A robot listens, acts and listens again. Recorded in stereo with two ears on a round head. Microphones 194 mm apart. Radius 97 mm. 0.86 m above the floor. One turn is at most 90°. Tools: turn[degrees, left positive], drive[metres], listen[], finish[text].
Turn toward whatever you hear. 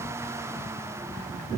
Action: listen[]
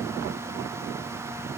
Action: listen[]
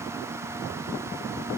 Action: finish[I can't make out anything to turn to.]